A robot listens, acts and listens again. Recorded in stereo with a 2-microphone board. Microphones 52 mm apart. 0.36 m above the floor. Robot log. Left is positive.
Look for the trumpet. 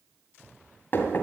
cmd idle
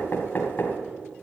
cmd idle
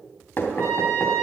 note: The trumpet: about 55° right or 125° right.
cmd yaw -55
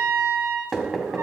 note: So it is at 65° right.
cmd yaw -65
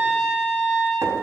end: Found it: a trumpet, straight ahead, over 4 m away.